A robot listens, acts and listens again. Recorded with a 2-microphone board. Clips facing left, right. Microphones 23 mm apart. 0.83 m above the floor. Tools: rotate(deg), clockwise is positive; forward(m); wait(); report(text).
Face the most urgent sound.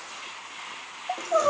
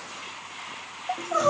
rotate(25)
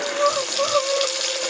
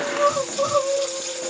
report("Found it: crying, straight ahead.")